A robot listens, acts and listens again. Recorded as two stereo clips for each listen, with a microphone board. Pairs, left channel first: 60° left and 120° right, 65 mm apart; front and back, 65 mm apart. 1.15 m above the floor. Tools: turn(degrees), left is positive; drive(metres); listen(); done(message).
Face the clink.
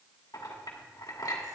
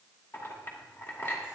turn(degrees=50)
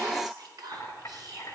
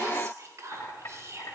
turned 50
turn(degrees=20)
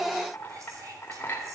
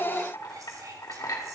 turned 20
done("Found it: a clink, straight ahead.")